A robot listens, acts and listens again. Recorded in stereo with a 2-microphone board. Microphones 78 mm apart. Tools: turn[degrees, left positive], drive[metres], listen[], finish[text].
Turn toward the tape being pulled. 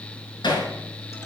Action: listen[]
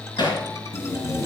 Thought: The tape being pulled: about 40° left or 140° left.
Action: turn[40]
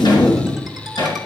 Thought: So it is at 100° left.
Action: turn[100]
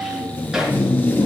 Thought: The tape being pulled is now 25° left.
Action: turn[25]
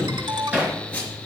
Thought: The tape being pulled is now 15° left.
Action: turn[15]
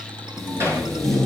Action: finish[Found it: tape being pulled, straight ahead.]